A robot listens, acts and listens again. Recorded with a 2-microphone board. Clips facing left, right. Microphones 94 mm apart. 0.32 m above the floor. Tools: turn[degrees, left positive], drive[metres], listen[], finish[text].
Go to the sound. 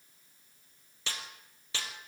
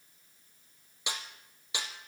Thought: The snare drum: about 15° right or 165° right.
Action: turn[-15]
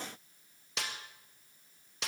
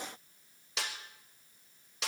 Action: drive[1.0]
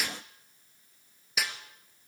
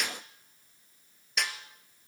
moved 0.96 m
Action: drive[1.0]
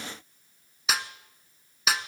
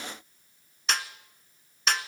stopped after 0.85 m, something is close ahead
Action: finish[Arrived at the snare drum, straight ahead.]